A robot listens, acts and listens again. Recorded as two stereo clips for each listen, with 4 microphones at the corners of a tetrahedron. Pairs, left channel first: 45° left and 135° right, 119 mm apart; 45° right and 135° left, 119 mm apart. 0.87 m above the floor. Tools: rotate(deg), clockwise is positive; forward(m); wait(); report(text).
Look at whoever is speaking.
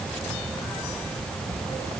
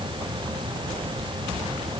wait()
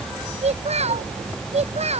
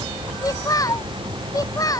rotate(105)
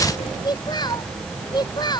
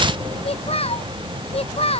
rotate(10)
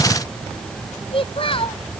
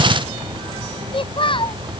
report("Facing the child speaking.")